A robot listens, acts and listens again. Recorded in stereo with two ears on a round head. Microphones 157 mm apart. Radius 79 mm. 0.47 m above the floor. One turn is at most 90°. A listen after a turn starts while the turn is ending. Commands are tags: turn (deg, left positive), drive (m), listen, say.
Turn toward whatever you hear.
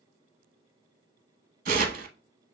<turn deg="-50"/>
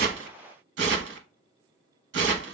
<turn deg="-75"/>
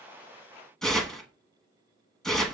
<say>Found it: tearing paper, straight ahead, under 1 m away.</say>